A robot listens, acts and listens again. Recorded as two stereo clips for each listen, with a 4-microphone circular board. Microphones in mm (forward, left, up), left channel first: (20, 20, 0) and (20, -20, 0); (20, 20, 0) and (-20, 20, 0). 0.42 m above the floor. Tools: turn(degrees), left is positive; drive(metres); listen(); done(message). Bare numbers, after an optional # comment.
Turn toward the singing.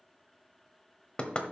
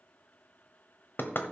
listen()
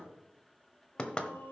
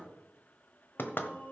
# The singing: 50° left.
turn(50)
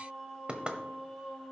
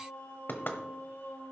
# The singing is now 10° right.
turn(-10)
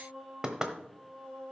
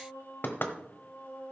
# The singing is now 10° right.
turn(-10)
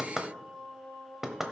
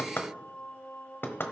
done("Found it: singing, straight ahead, over 4 m away.")